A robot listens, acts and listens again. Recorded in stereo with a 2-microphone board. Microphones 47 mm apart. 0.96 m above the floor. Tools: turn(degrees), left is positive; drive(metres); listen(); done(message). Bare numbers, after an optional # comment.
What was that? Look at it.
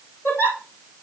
# The giggle: about 60° left or 120° left.
turn(60)
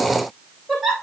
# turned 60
done("Facing the giggle.")